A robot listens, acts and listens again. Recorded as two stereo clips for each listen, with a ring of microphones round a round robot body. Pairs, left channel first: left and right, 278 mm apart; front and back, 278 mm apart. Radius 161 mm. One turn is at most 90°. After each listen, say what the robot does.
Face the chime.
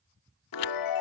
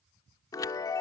Turn 80° left.
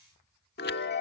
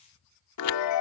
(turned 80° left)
Turn 30° left.
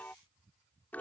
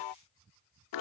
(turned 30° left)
Found it: a chime, straight ahead.